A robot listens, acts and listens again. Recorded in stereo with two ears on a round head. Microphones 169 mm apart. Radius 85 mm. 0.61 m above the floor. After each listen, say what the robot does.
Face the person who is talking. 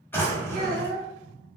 Turn 50° right.
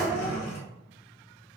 Keep listening.
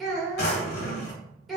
Found it: a child speaking, straight ahead, 1 to 2 m away.